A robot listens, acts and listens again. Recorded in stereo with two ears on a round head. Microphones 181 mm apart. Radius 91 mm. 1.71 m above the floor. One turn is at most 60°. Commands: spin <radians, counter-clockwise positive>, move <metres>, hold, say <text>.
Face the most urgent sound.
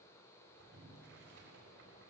hold
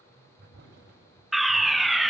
spin 0.52
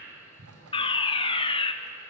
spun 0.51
spin 1.05
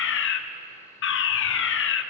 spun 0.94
spin 1.05
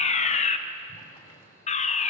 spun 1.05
spin 0.61
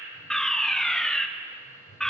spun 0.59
say Found it: a fire alarm, straight ahead.